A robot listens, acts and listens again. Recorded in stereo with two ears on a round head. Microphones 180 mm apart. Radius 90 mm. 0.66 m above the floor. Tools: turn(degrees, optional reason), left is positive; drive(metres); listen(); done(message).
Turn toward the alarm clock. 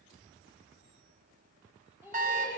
turn(degrees=-40, reason="The alarm clock: about 40° right or 140° right.")
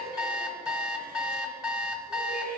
done("Facing the alarm clock.")